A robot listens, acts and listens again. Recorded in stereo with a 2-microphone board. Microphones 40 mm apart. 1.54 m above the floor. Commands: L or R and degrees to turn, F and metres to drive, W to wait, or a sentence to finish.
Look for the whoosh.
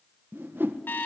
R60
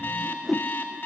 Found it: a whoosh, straight ahead, 1 to 2 m away.